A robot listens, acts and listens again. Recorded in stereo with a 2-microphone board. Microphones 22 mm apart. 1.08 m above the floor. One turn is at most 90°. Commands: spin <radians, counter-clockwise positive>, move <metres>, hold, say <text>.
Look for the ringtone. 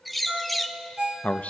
spin -0.87
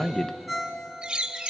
say Found it: a ringtone, straight ahead, 2 to 4 m away.